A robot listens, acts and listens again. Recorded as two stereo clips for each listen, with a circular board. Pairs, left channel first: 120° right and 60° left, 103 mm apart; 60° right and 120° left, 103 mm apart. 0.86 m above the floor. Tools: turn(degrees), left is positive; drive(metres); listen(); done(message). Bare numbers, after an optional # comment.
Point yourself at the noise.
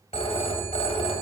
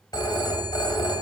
# The phone ringing: 110° right.
turn(-110)
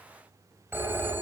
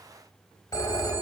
done("Found it: a phone ringing, straight ahead.")